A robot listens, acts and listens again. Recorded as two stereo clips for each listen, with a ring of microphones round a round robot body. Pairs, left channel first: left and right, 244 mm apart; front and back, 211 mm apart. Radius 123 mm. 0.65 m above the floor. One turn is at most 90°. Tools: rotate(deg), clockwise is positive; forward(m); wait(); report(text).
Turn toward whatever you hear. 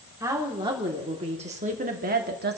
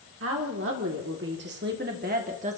rotate(90)
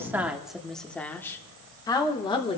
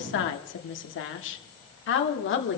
rotate(-20)
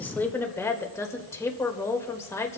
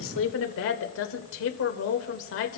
rotate(-10)
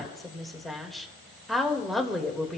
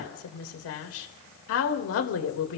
report("Facing the woman speaking.")